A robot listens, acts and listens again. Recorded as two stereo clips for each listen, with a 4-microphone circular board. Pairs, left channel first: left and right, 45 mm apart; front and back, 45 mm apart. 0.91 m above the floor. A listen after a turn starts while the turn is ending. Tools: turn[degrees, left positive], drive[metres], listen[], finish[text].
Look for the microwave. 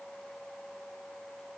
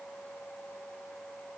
Action: listen[]
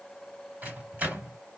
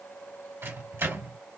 Thought: The microwave: 150° right.
Action: turn[-150]
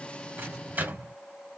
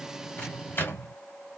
Thought: The microwave is now 40° right.
Action: turn[-40]
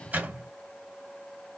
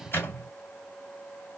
Thought: The microwave is now 35° right.
Action: turn[-35]
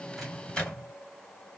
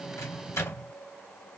Thought: The microwave is now 15° left.
Action: turn[15]
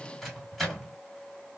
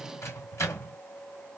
Action: finish[Facing the microwave.]